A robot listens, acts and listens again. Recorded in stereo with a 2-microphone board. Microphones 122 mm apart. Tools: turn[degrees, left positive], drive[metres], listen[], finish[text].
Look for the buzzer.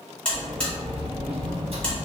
Action: turn[30]
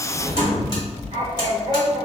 Action: listen[]
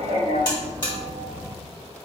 Thought: So it is at 145° left.
Action: turn[145]
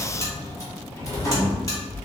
Action: listen[]
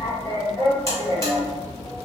Action: listen[]
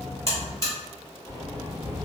Thought: The buzzer is now 25° left.
Action: turn[25]
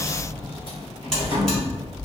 Action: listen[]
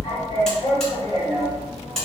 Action: finish[Facing the buzzer.]